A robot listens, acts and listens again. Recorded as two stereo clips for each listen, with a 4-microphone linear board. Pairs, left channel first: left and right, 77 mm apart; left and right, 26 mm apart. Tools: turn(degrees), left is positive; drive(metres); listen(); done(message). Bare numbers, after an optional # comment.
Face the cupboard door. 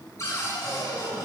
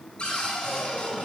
# The cupboard door: about 35° left or 145° left.
turn(35)
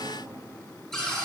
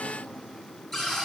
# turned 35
done("Facing the cupboard door.")